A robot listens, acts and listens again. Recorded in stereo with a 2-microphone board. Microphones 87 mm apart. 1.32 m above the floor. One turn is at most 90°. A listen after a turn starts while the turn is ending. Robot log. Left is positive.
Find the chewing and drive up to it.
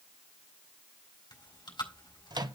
note: The chewing: about 65° left or 115° left.
cmd yaw +65
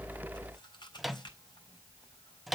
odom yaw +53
note: So it is at 60° left.
cmd yaw +60
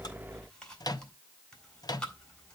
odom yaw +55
note: The chewing is now 10° left.
cmd yaw +10
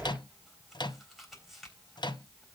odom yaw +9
cmd fwd 1.0
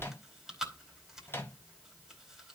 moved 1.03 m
cmd fwd 1.0
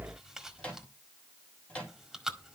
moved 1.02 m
cmd fwd 1.0
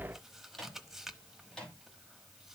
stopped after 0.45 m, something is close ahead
end: I am next to the chewing.